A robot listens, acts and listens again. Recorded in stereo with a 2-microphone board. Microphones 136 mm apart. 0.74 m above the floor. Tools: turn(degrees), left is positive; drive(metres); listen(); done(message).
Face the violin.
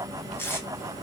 listen()
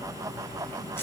listen()
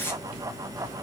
done("I can't make out a violin, only tape being pulled.")